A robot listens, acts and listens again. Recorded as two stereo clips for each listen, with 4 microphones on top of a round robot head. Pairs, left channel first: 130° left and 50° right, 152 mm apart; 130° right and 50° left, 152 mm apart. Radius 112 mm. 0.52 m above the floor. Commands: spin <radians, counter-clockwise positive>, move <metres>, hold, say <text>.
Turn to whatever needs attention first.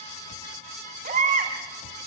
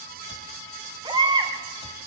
spin -0.17
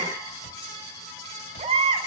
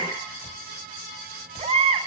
say Found it: a baby crying, straight ahead, 2 to 4 m away.